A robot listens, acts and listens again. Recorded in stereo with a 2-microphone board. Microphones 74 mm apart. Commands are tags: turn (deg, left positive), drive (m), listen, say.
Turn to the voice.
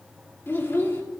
<turn deg="30"/>
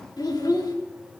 <turn deg="120"/>
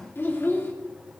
<turn deg="30"/>
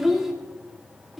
<say>Found it: a child speaking, straight ahead, 2 to 4 m away.</say>